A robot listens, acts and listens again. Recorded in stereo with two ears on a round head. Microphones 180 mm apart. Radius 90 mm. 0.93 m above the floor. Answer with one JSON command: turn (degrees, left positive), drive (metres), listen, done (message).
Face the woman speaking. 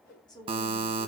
{"turn": 20}
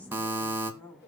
{"turn": 30}
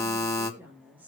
{"turn": -10}
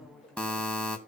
{"listen": true}
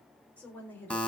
{"turn": 10}
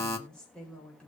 {"done": "Found it: a woman speaking, straight ahead, over 4 m away."}